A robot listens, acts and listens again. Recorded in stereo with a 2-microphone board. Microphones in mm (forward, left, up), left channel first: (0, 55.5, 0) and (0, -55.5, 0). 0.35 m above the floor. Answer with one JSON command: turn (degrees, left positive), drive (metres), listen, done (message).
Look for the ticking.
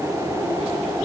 {"listen": true}
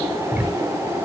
{"turn": -30}
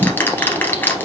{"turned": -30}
{"turn": 20}
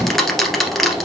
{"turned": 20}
{"done": "Found it: ticking, straight ahead."}